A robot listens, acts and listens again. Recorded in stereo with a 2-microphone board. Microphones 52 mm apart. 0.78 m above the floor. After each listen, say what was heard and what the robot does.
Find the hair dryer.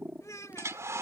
The hair dryer: about 65° right or 115° right. Turn 65° right.
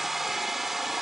Facing the hair dryer.